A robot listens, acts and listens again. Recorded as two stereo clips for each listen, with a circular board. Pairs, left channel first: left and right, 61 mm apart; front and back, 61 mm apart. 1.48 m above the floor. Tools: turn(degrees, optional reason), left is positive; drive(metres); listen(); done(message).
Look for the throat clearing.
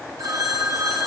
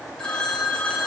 listen()
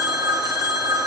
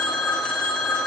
listen()
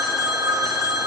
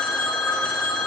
done("I can't make out throat clearing, only a phone ringing.")